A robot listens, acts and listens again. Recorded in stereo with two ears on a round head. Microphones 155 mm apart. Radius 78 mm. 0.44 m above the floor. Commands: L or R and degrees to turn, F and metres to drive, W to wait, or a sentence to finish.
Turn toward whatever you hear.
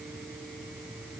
W
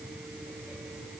W
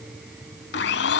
L60
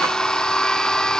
Facing the blender, under 1 m away.